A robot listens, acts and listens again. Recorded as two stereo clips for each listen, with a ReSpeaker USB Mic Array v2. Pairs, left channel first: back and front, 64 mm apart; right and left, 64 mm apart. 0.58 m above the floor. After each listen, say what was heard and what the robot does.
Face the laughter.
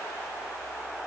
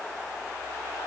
Keep listening.
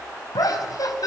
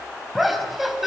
The laughter: 175° left. Turn 175° left.
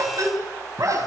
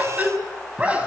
The laughter is now 20° left. Turn 20° left.
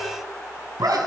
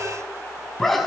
Facing the laughter.